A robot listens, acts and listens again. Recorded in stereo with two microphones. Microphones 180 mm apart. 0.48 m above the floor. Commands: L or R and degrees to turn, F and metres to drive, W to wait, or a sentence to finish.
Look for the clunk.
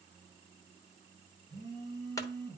L20
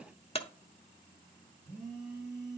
L140
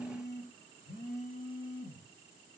I heard a clunk from this way, but can't make it out now.